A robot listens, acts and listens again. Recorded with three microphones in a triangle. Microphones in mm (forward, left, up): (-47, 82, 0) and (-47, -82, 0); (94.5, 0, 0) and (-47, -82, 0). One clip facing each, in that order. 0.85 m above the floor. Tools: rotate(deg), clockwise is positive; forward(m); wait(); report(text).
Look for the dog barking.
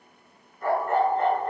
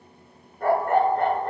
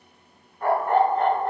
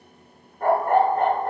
rotate(110)
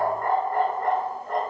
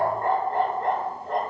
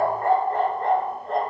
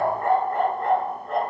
rotate(25)
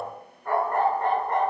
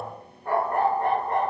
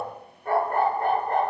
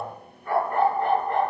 rotate(15)
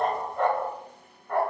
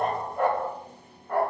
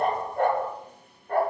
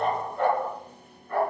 rotate(10)
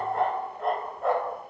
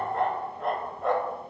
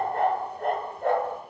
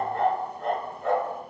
report("Facing the dog barking, 1 to 2 m away.")